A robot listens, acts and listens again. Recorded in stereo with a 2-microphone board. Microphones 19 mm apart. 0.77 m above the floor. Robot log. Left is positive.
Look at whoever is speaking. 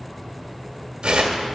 cmd idle
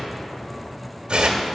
cmd idle
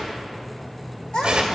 note: The child speaking: about 55° left or 125° left.
cmd yaw +55
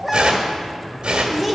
end: Facing the child speaking, 1 to 2 m away.